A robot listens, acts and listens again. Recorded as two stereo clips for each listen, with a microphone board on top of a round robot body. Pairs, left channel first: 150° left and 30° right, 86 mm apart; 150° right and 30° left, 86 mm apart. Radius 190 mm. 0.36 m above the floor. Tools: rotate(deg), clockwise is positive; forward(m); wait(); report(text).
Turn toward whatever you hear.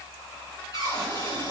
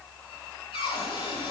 rotate(165)
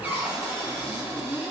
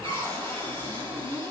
rotate(-40)
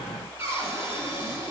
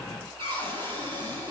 rotate(-30)
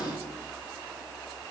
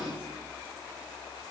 wait()
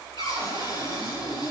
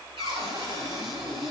report("Facing the cupboard door.")